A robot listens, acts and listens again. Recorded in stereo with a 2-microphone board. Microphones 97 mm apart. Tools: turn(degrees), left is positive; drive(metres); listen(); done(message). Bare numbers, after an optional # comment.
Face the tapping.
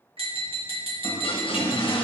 # The tapping: about 75° right or 105° right.
turn(-75)
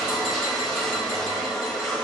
listen()
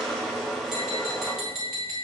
done("Facing the tapping, 2 to 4 m away.")